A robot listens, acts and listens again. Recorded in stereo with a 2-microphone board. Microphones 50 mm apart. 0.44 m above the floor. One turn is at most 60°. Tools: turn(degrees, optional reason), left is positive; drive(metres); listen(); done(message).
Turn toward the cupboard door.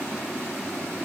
listen()
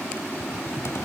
turn(degrees=60, reason="The cupboard door: about 65° left or 115° left.")
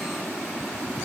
listen()
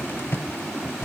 turn(degrees=55, reason="So it is at 55° left.")
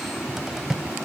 turn(degrees=-10, reason="The cupboard door is now 10° right.")
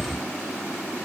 done("Found it: a cupboard door, straight ahead.")